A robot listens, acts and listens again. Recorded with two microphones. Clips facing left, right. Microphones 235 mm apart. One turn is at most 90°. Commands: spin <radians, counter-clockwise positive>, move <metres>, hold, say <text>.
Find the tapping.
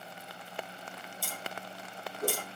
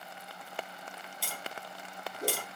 spin -1.57
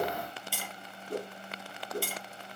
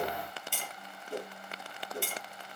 spin 0.17
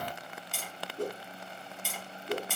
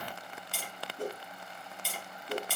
say Found it: tapping, straight ahead.